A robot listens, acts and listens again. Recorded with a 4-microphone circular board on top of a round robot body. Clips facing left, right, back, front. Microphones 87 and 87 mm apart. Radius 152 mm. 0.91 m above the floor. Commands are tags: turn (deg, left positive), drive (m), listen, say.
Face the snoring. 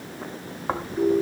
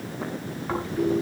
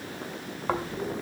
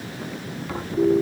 <turn deg="145"/>
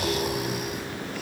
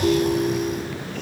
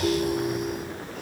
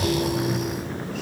<listen/>
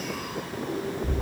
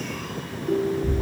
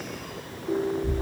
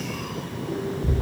<turn deg="10"/>
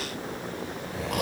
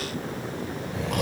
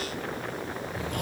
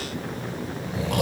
<say>Found it: snoring, straight ahead, 2 to 4 m away.</say>